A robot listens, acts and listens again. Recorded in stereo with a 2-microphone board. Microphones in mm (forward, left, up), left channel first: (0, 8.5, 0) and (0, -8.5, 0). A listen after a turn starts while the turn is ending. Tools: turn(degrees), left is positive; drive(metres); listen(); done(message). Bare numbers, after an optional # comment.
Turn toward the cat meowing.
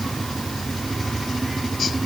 listen()
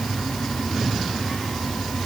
listen()
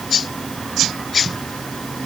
done("I can't make out a cat meowing to turn to.")